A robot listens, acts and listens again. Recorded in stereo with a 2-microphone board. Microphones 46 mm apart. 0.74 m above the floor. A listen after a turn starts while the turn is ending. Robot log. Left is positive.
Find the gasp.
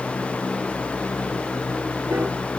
cmd idle
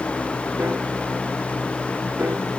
cmd idle
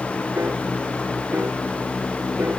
end: I can't make out a gasp to turn to.